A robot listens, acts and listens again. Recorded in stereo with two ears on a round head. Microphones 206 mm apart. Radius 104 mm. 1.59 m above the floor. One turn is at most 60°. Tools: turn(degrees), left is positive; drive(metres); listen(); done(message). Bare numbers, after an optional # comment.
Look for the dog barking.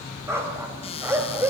turn(-30)
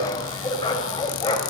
# So it is at 20° left.
turn(20)
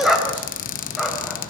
done("Found it: a dog barking, straight ahead, 2 to 4 m away.")